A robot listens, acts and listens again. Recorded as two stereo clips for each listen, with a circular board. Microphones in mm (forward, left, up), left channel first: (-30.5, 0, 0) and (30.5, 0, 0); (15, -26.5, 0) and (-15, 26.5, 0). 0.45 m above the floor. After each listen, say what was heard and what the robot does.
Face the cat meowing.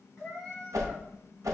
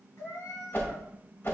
The cat meowing: 85° right. Turn 85° right.
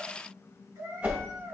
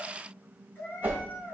The cat meowing is now 10° right. Turn 10° right.
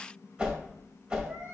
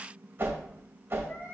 Keep listening.
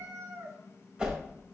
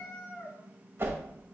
Found it: a cat meowing, straight ahead, 2 to 4 m away.